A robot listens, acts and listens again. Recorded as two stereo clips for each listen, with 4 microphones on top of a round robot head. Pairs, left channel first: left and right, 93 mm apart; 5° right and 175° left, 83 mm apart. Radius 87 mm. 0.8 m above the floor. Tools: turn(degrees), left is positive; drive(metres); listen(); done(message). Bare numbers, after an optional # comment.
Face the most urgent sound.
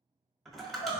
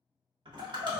# The crying: 95° left.
turn(95)
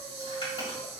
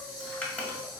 listen()
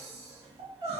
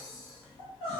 # The crying is now 20° right.
turn(-20)
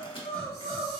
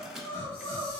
done("Found it: crying, straight ahead.")